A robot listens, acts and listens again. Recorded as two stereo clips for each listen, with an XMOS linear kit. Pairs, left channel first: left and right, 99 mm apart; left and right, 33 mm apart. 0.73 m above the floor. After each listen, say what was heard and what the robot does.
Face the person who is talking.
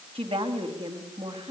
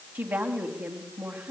The woman speaking: about 70° right or 110° right. Turn 70° right.
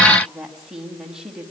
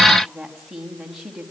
Found it: a woman speaking, straight ahead, over 4 m away.